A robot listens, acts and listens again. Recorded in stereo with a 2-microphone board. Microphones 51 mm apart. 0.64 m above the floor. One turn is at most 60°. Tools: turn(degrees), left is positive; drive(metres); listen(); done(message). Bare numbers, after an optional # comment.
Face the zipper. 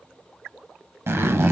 # The zipper: about 50° right or 130° right.
turn(-50)
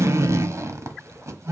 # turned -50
# So it is at 75° right.
turn(-60)
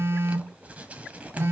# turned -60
# Nothing new. It was at 15° right.
turn(-15)
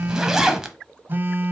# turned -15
# The zipper is now 10° right.
turn(-10)
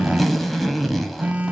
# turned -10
done("Facing the zipper.")